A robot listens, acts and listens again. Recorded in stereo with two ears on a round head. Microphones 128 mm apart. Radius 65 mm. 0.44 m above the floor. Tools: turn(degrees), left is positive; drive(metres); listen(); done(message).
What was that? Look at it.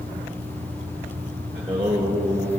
turn(degrees=-30)
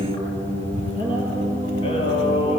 turn(degrees=40)
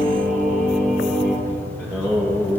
turn(degrees=10)
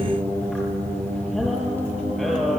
done("Facing the singing, over 4 m away.")